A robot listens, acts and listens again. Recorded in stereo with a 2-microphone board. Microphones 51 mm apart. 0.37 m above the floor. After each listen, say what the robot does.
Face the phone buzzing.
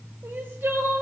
Keep listening.
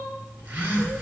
Turn 25° right.
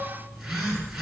Facing the phone buzzing, 2 to 4 m away.